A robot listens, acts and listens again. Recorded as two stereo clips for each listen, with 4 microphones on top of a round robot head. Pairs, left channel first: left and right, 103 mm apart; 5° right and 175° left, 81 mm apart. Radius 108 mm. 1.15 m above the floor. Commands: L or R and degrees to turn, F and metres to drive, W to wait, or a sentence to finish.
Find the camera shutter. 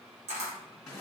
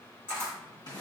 R75
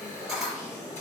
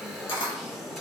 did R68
R10
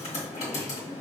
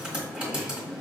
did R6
W
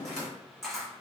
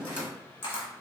Facing the camera shutter, 1 to 2 m away.